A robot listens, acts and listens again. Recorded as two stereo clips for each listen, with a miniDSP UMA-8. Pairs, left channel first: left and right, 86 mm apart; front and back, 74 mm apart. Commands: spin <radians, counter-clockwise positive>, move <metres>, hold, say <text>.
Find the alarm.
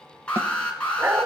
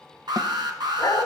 spin 2.88
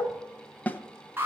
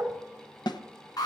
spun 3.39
spin -0.44
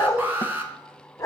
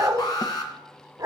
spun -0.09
spin -0.35
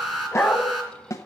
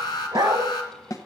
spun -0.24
say Facing the alarm, 2 to 4 m away.